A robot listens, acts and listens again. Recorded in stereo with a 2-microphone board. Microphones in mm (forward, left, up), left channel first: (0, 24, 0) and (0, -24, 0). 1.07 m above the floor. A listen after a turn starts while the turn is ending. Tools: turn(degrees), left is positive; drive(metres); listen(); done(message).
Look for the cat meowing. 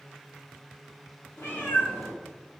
turn(degrees=50)
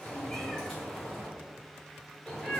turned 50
done("Facing the cat meowing.")